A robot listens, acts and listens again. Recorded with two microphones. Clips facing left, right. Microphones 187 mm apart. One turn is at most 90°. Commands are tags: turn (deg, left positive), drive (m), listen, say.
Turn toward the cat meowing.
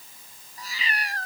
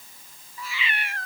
<turn deg="40"/>
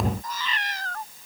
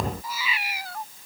<turn deg="-10"/>
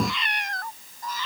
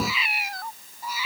<turn deg="-10"/>
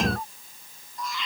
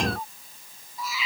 <say>Found it: a cat meowing, straight ahead.</say>